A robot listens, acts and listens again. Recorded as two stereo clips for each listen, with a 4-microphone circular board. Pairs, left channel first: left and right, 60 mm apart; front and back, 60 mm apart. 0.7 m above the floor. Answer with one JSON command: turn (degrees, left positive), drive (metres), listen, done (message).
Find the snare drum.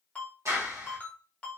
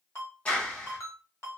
{"listen": true}
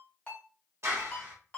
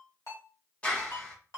{"listen": true}
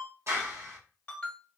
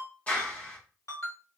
{"done": "I can't make out a snare drum, only a clap and a ringtone."}